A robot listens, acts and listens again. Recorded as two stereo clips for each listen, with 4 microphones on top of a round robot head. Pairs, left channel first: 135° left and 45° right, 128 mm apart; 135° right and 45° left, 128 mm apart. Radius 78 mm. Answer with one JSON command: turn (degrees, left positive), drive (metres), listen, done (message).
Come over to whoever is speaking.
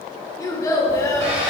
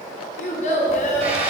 {"turn": -160}
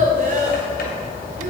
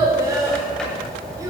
{"turn": -20}
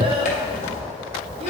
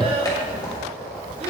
{"drive": 1.0}
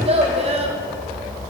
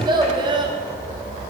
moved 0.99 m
{"drive": 1.0}
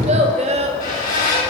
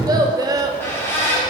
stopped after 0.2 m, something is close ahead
{"turn": -10}
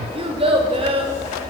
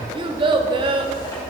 {"done": "I am next to the child speaking."}